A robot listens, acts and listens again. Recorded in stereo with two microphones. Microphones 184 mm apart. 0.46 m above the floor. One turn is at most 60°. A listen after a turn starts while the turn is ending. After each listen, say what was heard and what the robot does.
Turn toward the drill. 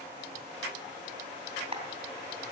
Keep listening.
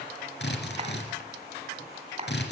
The drill: about 70° left or 110° left. Turn 60° left.
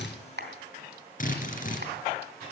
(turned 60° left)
So it is at 50° left. Turn 50° left.
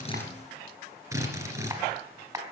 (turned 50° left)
The drill is now 15° right. Turn 15° right.
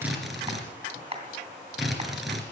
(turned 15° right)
Found it: a drill, straight ahead, 2 to 4 m away.